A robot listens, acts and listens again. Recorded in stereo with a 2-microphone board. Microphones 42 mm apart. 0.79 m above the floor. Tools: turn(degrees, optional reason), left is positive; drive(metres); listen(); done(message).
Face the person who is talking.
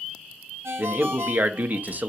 turn(degrees=-45, reason="The man speaking: about 45° right or 135° right.")
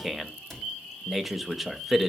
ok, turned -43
done("Facing the man speaking.")